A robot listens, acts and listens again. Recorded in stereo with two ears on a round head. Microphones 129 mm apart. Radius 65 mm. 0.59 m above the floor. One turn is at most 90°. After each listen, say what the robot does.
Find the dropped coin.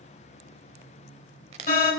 Turn 45° right.
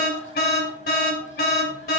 Keep listening.
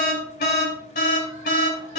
I heard a dropped coin, but can't make it out now. It was about straight ahead or 90° right.